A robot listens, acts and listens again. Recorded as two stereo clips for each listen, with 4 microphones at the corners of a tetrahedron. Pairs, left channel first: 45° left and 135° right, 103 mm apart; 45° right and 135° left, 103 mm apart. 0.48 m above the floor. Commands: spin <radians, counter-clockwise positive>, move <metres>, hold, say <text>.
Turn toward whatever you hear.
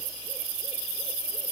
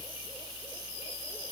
hold
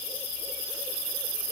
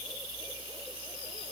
hold
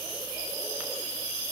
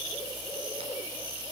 say I can't make out anything to turn to.